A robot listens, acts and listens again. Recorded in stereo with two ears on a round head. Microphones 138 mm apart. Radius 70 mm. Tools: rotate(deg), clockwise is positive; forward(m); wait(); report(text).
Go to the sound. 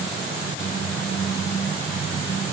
wait()
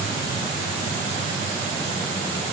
wait()
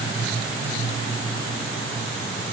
report("I can't make out anything to turn to.")